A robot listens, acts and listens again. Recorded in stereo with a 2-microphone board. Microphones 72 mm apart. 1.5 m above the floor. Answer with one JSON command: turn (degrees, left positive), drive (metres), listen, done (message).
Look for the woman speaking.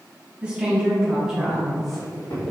{"turn": -30}
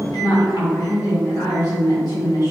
{"turn": 70}
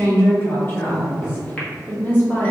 {"turn": 20}
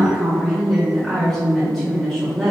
{"done": "Found it: a woman speaking, straight ahead, 1 to 2 m away."}